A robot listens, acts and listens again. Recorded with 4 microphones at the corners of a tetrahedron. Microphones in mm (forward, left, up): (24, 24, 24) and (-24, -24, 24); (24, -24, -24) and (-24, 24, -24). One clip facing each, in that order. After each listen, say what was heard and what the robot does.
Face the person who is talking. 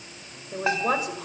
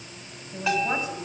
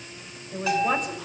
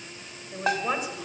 The man speaking: 50° left. Turn 50° left.
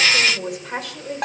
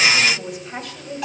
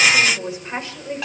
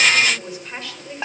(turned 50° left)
The man speaking is now 25° left. Turn 25° left.
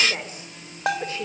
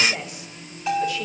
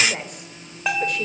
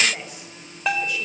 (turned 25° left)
The man speaking is now 10° right. Turn 10° right.
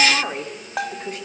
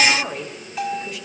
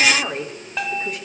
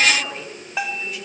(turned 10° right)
Facing the man speaking, 2 to 4 m away.